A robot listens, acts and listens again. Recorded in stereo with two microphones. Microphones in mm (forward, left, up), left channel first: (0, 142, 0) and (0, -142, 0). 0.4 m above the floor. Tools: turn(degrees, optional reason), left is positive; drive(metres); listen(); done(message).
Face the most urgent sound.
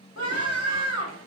turn(degrees=60, reason="The scream: about 60° left or 120° left.")
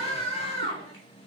turn(degrees=25, reason="So it is at 25° left.")
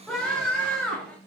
done("Found it: a scream, straight ahead.")